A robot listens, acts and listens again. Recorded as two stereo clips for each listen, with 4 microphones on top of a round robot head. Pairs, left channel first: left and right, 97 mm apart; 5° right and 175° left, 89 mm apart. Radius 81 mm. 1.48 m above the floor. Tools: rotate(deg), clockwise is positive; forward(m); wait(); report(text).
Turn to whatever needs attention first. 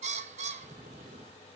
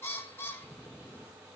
wait()
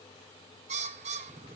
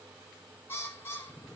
wait()
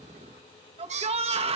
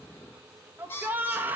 rotate(110)
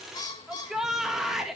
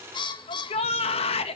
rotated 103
report("Facing the shout.")